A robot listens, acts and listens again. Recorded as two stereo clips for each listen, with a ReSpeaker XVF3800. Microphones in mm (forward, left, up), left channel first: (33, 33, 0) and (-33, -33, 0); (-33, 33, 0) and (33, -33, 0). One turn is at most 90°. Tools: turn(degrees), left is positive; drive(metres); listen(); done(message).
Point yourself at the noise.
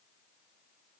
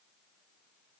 listen()
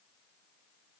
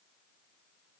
listen()
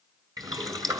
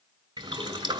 turn(degrees=-85)
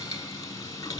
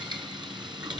turn(degrees=-10)
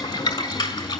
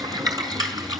done("Facing the boiling, 1 to 2 m away.")